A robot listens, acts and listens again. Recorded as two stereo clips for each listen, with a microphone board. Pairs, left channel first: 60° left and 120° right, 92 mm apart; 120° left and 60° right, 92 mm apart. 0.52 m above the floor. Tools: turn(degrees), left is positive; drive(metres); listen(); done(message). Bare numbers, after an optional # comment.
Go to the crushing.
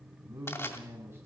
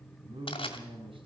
# The crushing: 120° left.
turn(120)
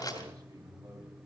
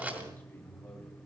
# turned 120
# The crushing is now 10° left.
turn(10)
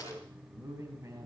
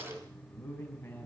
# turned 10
listen()
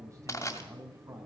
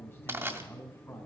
drive(1.0)
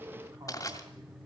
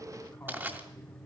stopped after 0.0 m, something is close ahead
# The crushing is now 10° left.
turn(10)
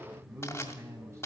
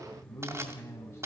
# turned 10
done("Blocked. The crushing is further on, straight ahead.")